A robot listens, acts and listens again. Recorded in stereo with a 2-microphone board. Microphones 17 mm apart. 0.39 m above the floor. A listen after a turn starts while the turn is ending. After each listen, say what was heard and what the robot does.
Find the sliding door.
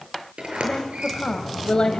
Turn 90° right.
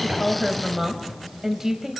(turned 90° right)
Found it: a sliding door, straight ahead, over 4 m away.